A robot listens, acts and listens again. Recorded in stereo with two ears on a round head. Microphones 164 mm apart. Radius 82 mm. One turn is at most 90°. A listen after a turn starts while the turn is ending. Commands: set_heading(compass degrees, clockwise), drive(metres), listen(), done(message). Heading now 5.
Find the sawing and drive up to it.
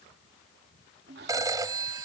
set_heading(65)
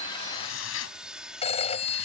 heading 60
drive(1.0)
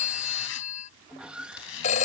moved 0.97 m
drive(1.0)
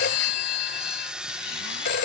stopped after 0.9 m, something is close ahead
done("Arrived at the sawing, straight ahead.")